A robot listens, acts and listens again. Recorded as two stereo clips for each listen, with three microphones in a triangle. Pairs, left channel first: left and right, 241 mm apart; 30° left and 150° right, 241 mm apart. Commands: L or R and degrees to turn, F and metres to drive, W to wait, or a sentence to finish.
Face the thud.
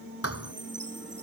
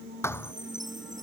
L110
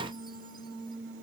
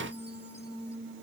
Facing where the thud came from. I can't hear it now.